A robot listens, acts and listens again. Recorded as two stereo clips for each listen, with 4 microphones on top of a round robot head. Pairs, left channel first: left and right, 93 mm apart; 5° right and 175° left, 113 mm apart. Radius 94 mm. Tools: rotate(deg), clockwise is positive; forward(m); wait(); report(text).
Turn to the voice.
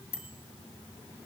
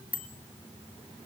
wait()
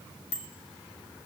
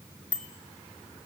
wait()
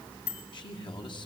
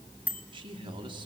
rotate(-130)
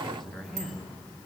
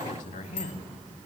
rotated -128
report("Found it: a man speaking, straight ahead.")